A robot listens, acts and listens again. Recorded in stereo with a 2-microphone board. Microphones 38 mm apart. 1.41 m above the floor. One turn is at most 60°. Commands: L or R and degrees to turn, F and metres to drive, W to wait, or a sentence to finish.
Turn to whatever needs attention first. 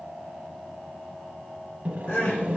L60
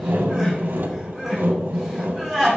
Facing the crying.